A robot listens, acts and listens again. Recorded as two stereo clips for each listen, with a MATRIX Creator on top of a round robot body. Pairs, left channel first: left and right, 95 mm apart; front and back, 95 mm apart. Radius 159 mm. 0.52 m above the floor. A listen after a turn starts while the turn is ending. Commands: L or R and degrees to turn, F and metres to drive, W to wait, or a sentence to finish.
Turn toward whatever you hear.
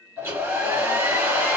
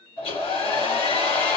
R25
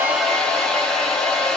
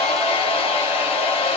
Facing the hair dryer, 1 to 2 m away.